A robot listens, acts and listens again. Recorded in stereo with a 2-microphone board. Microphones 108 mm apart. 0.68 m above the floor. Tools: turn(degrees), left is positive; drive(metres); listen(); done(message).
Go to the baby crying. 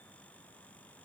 listen()
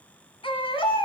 turn(degrees=55)
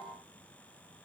listen()
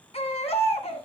turn(degrees=70)
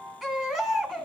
drive(metres=1.0)
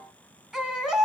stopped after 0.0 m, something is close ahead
done("Something is in my way. I am facing the baby crying but have not reached it.")